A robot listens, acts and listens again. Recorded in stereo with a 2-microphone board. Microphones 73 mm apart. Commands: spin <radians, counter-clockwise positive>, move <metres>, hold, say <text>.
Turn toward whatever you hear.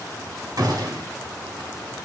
spin -1.05
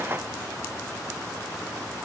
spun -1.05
hold
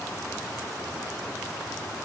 say I heard a gunshot, but can't make it out now. It was about straight ahead or 60° right.